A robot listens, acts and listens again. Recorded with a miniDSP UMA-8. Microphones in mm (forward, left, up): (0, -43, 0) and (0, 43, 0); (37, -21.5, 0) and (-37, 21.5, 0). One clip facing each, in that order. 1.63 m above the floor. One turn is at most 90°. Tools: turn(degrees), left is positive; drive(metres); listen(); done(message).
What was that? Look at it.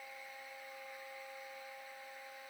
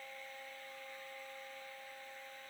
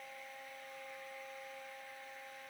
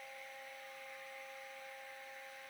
listen()
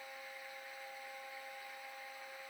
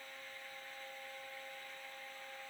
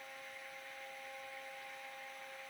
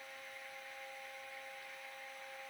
listen()
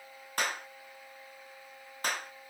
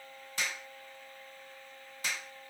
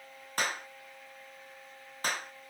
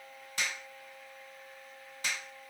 turn(degrees=-65)
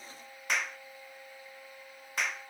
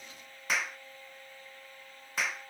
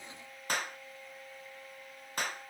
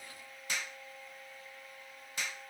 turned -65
done("Facing the clap.")